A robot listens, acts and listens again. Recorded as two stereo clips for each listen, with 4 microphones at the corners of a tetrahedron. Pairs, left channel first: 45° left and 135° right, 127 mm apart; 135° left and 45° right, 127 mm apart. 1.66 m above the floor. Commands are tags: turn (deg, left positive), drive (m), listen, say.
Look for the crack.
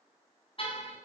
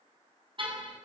<listen/>
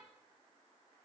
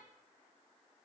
<listen/>
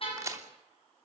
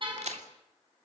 <turn deg="-70"/>
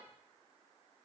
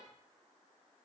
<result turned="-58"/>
<turn deg="-15"/>
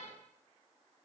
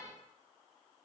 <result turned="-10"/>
<say>Facing where the crack came from. I can't hear it now.</say>